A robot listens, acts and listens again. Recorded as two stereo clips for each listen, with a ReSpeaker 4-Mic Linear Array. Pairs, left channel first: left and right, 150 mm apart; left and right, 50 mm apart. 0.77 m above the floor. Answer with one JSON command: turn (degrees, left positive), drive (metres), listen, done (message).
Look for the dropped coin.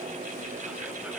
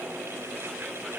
{"listen": true}
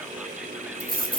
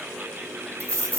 {"turn": -90}
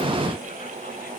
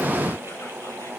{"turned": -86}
{"done": "Facing where the dropped coin came from. I can't hear it now."}